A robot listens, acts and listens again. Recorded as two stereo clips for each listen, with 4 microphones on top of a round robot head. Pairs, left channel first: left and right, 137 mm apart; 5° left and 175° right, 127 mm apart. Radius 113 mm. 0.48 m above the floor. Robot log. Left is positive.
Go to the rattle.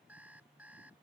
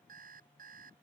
cmd idle
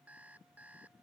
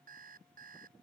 cmd idle
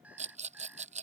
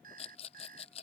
note: The rattle: 55° right.
cmd yaw -55
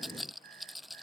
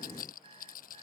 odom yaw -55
cmd fwd 1.0
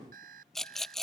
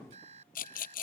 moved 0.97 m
cmd fwd 1.0
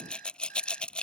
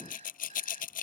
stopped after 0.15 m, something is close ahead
end: Blocked. The rattle is further on, straight ahead.